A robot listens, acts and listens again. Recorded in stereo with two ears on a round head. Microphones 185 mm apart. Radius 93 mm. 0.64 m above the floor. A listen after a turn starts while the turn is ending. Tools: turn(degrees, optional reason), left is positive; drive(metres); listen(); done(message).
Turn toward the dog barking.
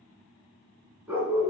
turn(degrees=-30)
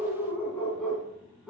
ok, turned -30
turn(degrees=-30)
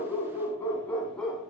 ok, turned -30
done("Found it: a dog barking, straight ahead.")